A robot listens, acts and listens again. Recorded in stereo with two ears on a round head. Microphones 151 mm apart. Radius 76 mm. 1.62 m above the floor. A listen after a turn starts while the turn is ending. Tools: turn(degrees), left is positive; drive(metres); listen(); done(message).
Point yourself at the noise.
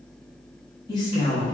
turn(degrees=35)
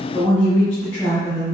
turn(degrees=25)
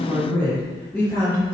turn(degrees=20)
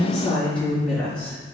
turn(degrees=15)
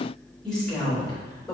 turn(degrees=10)
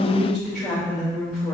done("Found it: a woman speaking, straight ahead, 2 to 4 m away.")